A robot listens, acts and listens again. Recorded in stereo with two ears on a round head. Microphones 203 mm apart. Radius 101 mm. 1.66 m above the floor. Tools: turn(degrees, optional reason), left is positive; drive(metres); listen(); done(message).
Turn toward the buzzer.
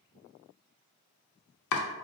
listen()
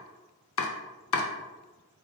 listen()
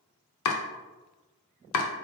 done("I can't make out a buzzer to turn to.")